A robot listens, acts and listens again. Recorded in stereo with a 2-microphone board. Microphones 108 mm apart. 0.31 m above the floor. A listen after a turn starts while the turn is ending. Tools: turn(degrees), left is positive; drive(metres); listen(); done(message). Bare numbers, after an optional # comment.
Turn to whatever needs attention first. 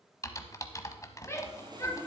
# The shout: about 25° left or 155° left.
turn(25)
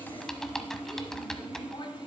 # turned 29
listen()
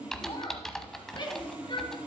# So it is at 120° left.
turn(120)
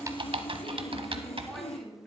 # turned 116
done("Found it: a shout, straight ahead.")